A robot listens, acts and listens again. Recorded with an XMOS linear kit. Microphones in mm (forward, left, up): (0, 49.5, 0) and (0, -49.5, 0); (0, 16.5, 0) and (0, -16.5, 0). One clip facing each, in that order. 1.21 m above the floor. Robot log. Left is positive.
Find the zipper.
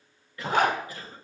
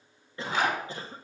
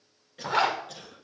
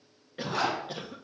note: The zipper: about 55° left or 125° left.
cmd yaw +55
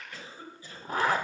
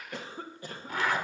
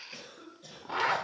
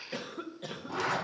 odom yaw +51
note: So it is at 45° left.
cmd yaw +45
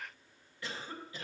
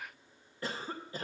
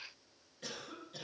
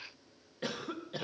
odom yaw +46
cmd idle
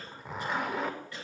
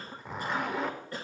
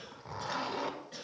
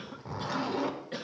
end: Facing the zipper.